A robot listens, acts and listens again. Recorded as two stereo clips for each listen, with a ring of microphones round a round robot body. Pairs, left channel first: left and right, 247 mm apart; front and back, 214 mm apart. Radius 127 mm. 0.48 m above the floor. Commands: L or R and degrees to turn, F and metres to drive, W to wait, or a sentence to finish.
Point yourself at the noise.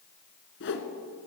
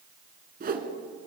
L135
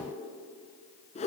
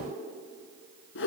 L25
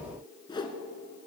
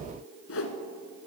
L15
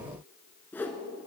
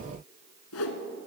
Facing the whoosh.